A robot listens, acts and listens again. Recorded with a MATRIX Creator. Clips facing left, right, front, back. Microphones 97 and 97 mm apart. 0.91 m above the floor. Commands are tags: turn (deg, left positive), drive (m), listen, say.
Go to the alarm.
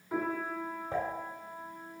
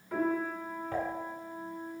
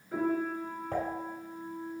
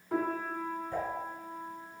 <listen/>
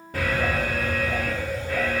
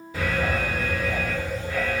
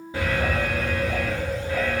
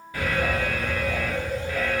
<turn deg="65"/>
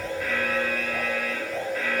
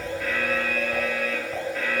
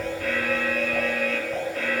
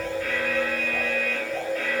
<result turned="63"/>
<drive m="1.0"/>
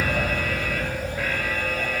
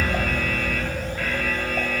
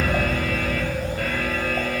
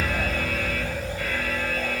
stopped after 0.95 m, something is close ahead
<turn deg="10"/>
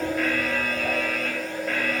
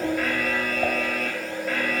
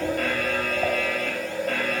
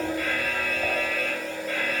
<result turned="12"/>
<say>I am next to the alarm.</say>